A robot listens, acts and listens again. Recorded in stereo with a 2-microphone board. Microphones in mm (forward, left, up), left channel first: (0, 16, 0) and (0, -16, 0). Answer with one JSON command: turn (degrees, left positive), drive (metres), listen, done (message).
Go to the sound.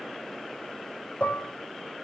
{"turn": 55}
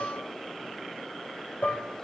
{"turn": 70}
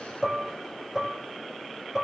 {"drive": 1.0}
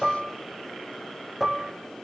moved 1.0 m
{"turn": -10}
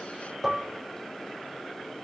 {"drive": 1.0}
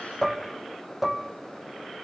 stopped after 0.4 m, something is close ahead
{"done": "I am next to the dishes clattering."}